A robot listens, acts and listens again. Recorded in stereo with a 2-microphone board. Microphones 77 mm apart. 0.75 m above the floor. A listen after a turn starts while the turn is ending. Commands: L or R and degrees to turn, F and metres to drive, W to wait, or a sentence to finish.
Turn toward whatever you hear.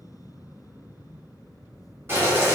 R30
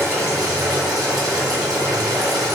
R120
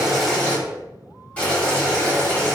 L15
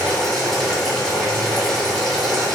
Facing the boiling, 1 to 2 m away.